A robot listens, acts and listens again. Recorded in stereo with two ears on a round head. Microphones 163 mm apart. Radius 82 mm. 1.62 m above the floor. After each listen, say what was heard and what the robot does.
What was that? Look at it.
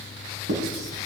The writing: about 60° right or 120° right. Turn 60° right.
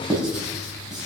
Facing the writing, over 4 m away.